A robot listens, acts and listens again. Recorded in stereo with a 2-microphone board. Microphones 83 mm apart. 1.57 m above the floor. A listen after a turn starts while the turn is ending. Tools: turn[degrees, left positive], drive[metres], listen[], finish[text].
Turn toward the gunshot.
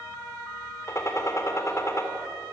Thought: The gunshot: about 35° left or 145° left.
Action: turn[35]
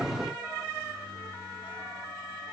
Action: listen[]
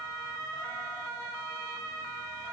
Action: finish[I heard a gunshot, but can't make it out now. It was about straight ahead or 110° left.]